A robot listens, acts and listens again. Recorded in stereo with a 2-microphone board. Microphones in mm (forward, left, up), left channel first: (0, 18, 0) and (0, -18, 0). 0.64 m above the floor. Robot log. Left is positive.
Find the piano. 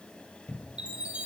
cmd idle
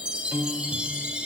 note: The piano: about 70° right or 110° right.
cmd yaw -70
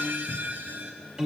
note: So it is at 20° right.
cmd yaw -20
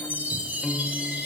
end: Facing the piano, 2 to 4 m away.